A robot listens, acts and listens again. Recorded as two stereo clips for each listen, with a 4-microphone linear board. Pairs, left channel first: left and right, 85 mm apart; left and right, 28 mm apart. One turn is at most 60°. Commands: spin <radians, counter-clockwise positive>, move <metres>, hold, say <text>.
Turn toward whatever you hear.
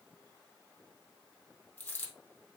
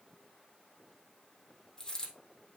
spin 0.35
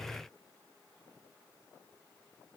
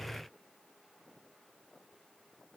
hold
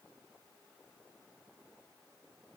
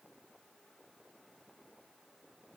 say I heard a dropped coin, but can't make it out now. It was about straight ahead or 140° left.